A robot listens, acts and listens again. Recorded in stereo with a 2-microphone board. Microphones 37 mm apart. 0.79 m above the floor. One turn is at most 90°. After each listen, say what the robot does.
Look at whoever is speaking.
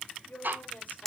Turn 50° left.
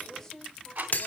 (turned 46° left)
Turn 10° left.
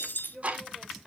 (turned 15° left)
Found it: a woman speaking, straight ahead.